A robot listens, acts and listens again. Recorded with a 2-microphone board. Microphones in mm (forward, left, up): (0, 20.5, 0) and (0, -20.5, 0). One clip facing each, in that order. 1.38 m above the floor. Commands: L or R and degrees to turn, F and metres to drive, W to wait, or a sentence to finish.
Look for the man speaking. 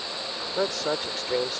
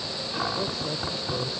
L90
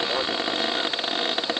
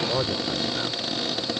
Found it: a man speaking, straight ahead.